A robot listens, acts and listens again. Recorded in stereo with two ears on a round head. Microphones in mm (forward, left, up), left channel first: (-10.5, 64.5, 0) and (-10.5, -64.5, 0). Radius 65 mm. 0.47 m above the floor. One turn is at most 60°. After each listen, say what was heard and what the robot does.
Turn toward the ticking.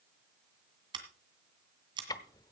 The ticking: about 25° left or 155° left. Turn 25° left.
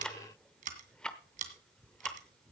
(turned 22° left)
Facing the ticking, under 1 m away.